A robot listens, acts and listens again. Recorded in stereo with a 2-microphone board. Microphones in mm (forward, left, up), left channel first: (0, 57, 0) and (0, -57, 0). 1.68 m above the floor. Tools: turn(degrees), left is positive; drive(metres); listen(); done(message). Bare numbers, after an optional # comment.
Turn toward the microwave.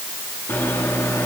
# The microwave: about 20° left or 160° left.
turn(20)
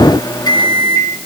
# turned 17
# So it is at 145° left.
turn(145)
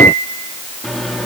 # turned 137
done("Facing the microwave.")